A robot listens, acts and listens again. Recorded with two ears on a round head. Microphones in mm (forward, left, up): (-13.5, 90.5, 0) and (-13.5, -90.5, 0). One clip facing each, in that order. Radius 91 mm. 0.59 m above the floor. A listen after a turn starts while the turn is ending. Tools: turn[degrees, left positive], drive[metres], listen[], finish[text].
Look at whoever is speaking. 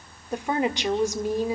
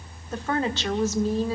Action: turn[30]
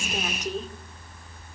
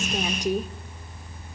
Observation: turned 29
Thought: So it is at 15° right.
Action: turn[-15]
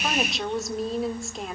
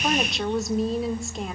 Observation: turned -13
Action: finish[Facing the woman speaking.]